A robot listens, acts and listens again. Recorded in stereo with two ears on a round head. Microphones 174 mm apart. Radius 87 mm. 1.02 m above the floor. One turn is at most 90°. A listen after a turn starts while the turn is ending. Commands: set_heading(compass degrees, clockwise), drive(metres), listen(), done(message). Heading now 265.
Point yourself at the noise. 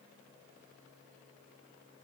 listen()
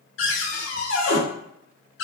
set_heading(195)
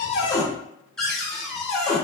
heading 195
done("Found it: a cupboard door, straight ahead.")